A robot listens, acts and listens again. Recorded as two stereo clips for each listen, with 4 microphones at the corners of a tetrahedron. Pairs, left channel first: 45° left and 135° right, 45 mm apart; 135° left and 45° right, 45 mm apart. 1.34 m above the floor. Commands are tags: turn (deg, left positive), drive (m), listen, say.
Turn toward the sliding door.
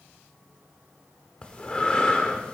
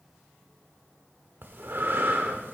<listen/>
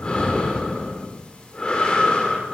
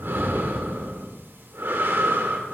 <listen/>
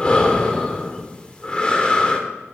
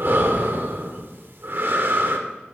<say>I can't make out a sliding door to turn to.</say>